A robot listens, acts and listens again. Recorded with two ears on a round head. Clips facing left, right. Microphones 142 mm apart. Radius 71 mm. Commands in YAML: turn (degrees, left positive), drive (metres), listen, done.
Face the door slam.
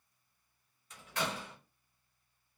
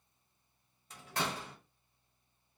turn: -30
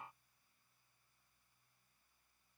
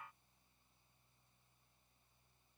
listen: true
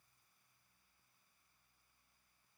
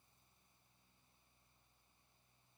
done: "I heard a door slam, but can't make it out now. It was about straight ahead or 120° right."